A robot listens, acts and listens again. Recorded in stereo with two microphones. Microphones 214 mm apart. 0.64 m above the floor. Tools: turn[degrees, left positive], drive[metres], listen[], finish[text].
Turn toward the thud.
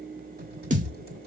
Thought: The thud: about 40° right or 140° right.
Action: turn[-40]
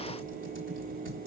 Action: listen[]
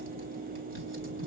Action: finish[I heard a thud, but can't make it out now. It was about straight ahead or 100° right.]